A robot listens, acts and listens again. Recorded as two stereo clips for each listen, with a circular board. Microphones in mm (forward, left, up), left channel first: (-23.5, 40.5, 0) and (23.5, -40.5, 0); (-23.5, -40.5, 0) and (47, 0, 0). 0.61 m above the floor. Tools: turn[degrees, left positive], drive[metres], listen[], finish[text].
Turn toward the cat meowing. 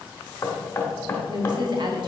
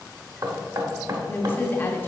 Action: listen[]
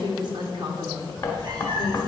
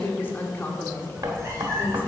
Thought: The cat meowing: 25° right.
Action: turn[-25]
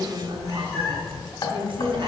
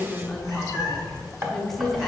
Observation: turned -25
Thought: The cat meowing is now 10° right.
Action: turn[-10]
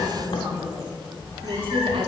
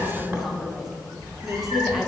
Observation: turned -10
Thought: The cat meowing is now 15° right.
Action: turn[-15]
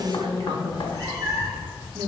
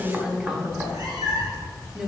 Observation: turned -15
Thought: The cat meowing is now 10° right.
Action: turn[-10]
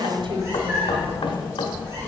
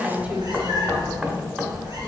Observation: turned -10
Action: finish[Facing the cat meowing, 2 to 4 m away.]